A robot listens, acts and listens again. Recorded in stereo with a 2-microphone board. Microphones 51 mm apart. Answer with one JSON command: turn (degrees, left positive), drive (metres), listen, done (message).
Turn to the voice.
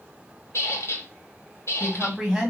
{"turn": -30}
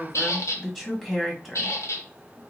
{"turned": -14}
{"done": "Facing the woman speaking."}